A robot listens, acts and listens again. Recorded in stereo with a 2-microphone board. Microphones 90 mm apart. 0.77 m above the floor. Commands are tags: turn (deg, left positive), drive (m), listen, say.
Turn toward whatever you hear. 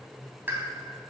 <turn deg="-25"/>
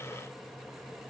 <listen/>
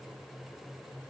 <say>I heard a pop, but can't make it out now. It was about straight ahead or 130° right.</say>